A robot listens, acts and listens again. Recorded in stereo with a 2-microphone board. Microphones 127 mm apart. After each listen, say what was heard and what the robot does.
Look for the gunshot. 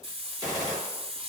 The gunshot: about 30° right or 150° right. Turn 30° right.
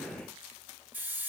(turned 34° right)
Keep listening.
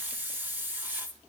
I heard a gunshot, but can't make it out now. It was about 5° left or 115° right.